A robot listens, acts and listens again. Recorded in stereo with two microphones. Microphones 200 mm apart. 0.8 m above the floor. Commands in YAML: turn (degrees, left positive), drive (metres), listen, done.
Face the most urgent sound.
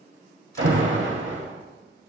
turn: -70
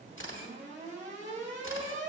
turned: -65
turn: -35
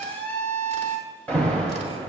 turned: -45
turn: 10
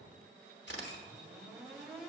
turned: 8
listen: true
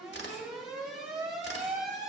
done: "Facing the alarm, 1 to 2 m away."